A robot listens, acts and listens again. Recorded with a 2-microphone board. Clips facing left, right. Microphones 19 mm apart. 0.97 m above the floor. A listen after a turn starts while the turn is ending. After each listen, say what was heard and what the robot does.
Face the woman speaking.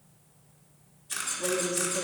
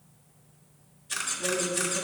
The woman speaking: about 55° left or 125° left. Turn 55° left.
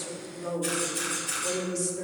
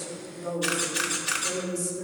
So it is at 30° left. Turn 30° left.
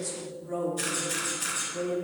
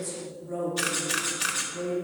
The woman speaking is now 25° left. Turn 25° left.
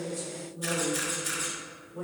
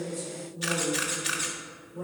Found it: a woman speaking, straight ahead, 2 to 4 m away.